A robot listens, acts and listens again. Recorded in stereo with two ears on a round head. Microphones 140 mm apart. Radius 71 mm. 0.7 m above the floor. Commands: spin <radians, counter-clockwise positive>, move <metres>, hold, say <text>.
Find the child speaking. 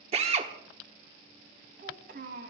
spin -1.22
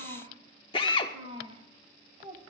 spin -0.52
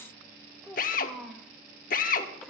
say Found it: a child speaking, straight ahead.